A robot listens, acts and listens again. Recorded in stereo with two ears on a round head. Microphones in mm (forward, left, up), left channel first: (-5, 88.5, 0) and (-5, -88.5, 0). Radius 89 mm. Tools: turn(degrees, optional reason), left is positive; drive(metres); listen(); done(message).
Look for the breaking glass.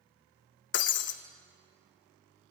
turn(degrees=60, reason="The breaking glass: about 60° left or 120° left.")
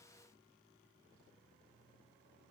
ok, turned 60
listen()
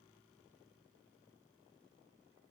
done("I heard breaking glass, but can't make it out now. It was about straight ahead or 60° left.")